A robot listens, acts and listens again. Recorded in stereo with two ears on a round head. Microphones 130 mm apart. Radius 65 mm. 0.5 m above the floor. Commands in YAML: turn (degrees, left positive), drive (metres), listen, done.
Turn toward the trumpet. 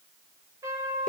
turn: -20
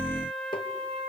turn: -135
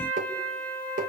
turn: 15
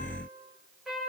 done: "Facing the trumpet."